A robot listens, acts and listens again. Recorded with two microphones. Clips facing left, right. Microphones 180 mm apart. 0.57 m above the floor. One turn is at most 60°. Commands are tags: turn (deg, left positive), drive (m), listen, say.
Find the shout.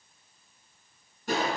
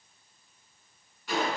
<listen/>
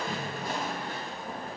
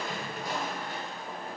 <listen/>
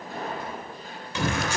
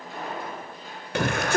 <turn deg="-60"/>
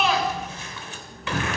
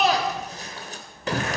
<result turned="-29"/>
<turn deg="-45"/>
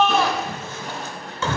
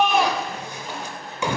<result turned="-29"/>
<turn deg="-15"/>
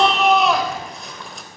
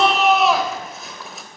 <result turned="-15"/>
<say>Facing the shout.</say>